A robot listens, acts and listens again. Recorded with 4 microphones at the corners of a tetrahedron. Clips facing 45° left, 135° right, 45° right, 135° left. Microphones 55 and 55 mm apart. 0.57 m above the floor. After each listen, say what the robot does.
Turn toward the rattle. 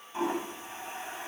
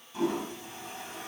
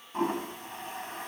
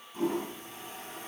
Keep listening.
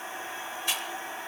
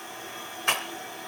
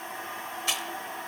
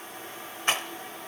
Turn 175° right.
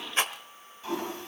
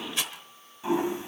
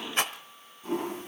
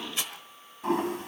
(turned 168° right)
Facing the rattle.